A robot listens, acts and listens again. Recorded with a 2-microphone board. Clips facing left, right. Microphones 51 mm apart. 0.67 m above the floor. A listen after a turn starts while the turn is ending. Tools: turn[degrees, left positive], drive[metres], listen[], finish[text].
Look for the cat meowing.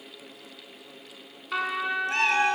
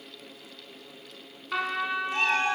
Thought: The cat meowing: about 65° left or 115° left.
Action: turn[65]
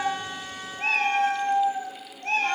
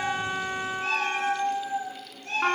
Thought: So it is at 50° left.
Action: turn[50]
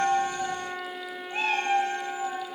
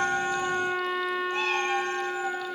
Thought: The cat meowing is now 15° left.
Action: turn[15]
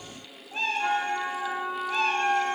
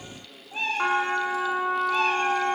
Action: finish[Facing the cat meowing, over 4 m away.]